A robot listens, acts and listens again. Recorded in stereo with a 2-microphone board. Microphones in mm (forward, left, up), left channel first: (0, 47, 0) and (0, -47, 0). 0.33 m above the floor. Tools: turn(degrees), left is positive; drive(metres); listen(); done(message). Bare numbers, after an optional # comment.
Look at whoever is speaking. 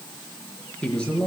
turn(30)
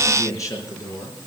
# So it is at 140° left.
turn(140)
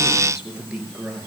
done("Facing the man speaking, over 4 m away.")